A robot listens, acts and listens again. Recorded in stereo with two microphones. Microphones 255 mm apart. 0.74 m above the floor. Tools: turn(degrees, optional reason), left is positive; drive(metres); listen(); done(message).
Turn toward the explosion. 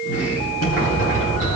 turn(degrees=90)
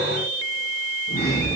done("Facing where the explosion came from. I can't hear it now.")